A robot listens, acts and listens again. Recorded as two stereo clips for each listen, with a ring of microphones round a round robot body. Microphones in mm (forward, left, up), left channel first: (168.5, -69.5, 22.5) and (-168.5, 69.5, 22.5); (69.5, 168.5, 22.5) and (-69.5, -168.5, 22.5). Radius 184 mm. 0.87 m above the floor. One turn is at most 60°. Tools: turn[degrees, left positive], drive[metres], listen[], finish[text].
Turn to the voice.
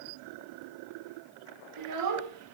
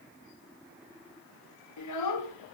Thought: The child speaking: 105° left.
Action: turn[60]
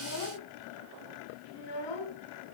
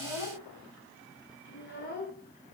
Action: finish[Found it: a child speaking, straight ahead, 2 to 4 m away.]